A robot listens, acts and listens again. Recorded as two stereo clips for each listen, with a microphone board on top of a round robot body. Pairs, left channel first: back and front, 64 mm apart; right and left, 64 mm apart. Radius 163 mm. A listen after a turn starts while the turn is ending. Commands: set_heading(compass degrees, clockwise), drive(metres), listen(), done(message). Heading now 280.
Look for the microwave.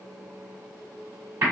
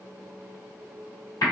listen()
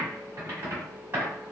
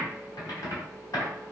listen()
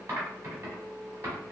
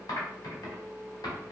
done("I can't make out a microwave to turn to.")